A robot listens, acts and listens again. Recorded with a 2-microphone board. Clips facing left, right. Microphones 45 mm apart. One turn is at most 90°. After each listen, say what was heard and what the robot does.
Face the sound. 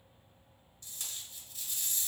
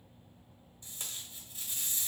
The tape being pulled: about 25° right or 155° right. Turn 25° right.
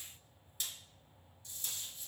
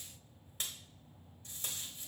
So it is at 125° right. Turn 90° right.
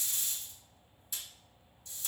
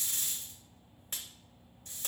The tape being pulled is now 60° right. Turn 60° right.
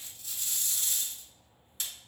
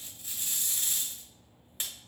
The tape being pulled is now 35° right. Turn 35° right.
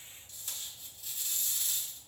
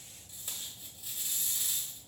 The tape being pulled is now 15° right. Turn 15° right.
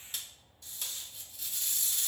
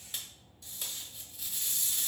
Found it: tape being pulled, straight ahead, 1 to 2 m away.